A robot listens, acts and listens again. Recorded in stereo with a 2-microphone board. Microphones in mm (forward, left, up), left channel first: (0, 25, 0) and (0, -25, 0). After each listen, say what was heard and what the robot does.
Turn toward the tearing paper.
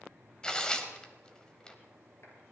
The tearing paper: about 20° left or 160° left. Turn 20° left.
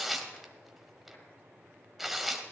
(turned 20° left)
Facing the tearing paper, 1 to 2 m away.